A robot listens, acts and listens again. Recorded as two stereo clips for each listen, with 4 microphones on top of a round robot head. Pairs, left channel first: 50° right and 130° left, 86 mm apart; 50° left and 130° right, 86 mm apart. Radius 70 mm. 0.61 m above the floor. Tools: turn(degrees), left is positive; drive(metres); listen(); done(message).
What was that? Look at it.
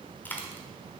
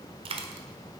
turn(degrees=-120)
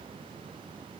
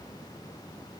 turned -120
done("I heard a dropped coin from this way, but can't make it out now.")